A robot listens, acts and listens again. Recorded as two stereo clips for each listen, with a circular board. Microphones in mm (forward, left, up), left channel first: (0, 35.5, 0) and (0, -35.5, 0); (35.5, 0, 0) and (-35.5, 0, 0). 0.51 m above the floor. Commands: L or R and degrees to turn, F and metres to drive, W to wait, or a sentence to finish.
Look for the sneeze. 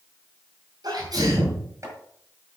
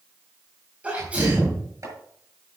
R110
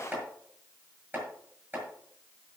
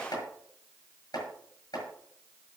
Facing where the sneeze came from. I can't hear it now.